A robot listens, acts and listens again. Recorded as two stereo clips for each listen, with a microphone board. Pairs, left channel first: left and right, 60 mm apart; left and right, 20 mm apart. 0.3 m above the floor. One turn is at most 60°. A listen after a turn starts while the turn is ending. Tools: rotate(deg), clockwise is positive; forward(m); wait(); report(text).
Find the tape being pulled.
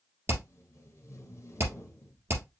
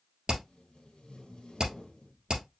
rotate(-50)
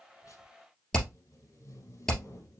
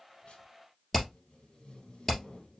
rotate(-60)
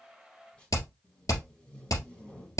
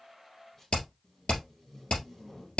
rotate(-15)
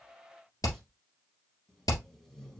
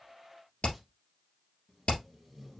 report("Found it: tape being pulled, straight ahead.")